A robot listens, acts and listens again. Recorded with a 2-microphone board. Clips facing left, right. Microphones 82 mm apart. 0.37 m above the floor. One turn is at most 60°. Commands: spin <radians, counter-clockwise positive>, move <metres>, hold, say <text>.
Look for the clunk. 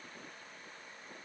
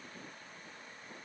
hold
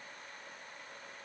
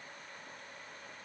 hold
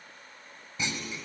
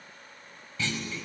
spin 0.35
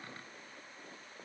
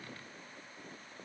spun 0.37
hold
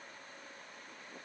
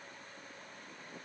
say I heard a clunk, but can't make it out now. It was about straight ahead or 140° left.